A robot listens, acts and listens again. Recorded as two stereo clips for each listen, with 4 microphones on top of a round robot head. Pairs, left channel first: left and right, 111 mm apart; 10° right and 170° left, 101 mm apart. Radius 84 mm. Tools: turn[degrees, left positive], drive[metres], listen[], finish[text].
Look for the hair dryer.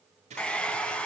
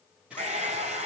Thought: The hair dryer: 170° left.
Action: turn[170]
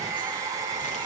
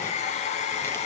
Thought: The hair dryer is now 25° right.
Action: turn[-25]
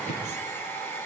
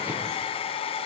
Thought: The hair dryer is now 15° left.
Action: turn[15]
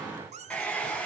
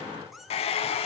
Thought: The hair dryer is now 10° left.
Action: turn[10]
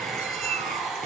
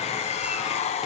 Action: finish[Found it: a hair dryer, straight ahead.]